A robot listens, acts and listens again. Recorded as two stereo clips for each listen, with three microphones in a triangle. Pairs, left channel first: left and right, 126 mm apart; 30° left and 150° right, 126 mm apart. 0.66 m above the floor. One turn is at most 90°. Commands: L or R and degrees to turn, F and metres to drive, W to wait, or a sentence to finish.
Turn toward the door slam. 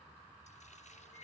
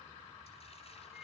W
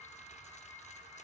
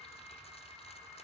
W
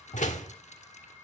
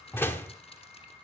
L90
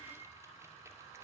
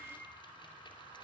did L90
L10
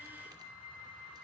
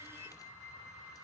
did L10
I heard a door slam from this way, but can't make it out now.